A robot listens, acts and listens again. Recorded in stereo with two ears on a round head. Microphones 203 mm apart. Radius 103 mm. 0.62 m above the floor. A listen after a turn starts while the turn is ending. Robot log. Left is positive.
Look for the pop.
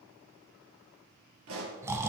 note: The pop: about 60° right or 120° right.
cmd yaw -60
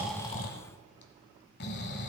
cmd idle
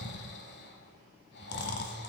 end: I heard a pop, but can't make it out now. It was about straight ahead or 60° right.